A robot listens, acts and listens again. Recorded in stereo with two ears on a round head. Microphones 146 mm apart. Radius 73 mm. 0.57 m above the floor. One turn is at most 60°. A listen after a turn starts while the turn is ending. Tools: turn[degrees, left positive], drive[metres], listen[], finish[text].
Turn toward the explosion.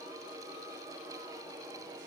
Action: listen[]
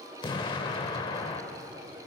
Thought: The explosion: about 25° left or 155° left.
Action: turn[25]
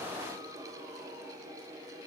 Action: listen[]
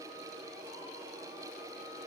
Action: finish[I heard an explosion, but can't make it out now. It was about straight ahead or 130° left.]